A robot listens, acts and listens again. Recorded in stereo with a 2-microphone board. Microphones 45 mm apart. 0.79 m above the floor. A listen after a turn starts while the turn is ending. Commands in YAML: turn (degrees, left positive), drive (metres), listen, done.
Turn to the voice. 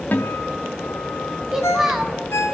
turn: -30
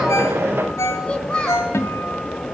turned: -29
turn: 20
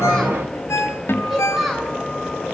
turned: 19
done: "Found it: a child speaking, straight ahead."